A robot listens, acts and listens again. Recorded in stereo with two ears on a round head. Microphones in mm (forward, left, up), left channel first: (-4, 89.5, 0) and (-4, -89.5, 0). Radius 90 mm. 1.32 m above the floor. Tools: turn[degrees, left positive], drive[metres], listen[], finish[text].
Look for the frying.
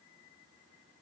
Action: listen[]
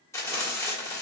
Action: turn[30]
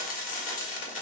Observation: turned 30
Thought: So it is at 130° left.
Action: turn[130]
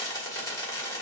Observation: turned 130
Thought: The frying is now 20° left.
Action: turn[20]
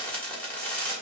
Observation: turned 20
Thought: The frying is now 10° left.
Action: turn[10]
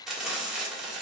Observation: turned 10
Action: finish[Found it: frying, straight ahead, 1 to 2 m away.]